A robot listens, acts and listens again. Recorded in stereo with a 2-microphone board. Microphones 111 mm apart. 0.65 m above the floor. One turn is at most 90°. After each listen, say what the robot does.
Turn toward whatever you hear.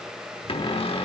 Turn 55° left.
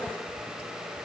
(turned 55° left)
Keep listening.
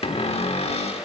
Turn 65° left.
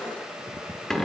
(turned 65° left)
Facing the cupboard door.